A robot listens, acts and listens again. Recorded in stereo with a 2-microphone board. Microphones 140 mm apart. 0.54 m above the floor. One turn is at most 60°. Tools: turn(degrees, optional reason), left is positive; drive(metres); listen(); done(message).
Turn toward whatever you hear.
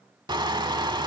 turn(degrees=-30, reason="The crushing: about 30° right or 150° right.")
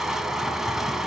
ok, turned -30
done("Found it: crushing, straight ahead.")